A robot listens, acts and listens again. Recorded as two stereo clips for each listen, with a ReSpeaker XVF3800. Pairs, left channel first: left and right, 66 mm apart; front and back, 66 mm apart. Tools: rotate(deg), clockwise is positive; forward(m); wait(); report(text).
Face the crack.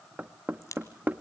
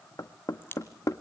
rotate(-55)
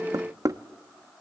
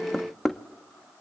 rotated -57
report("Facing where the crack came from. I can't hear it now.")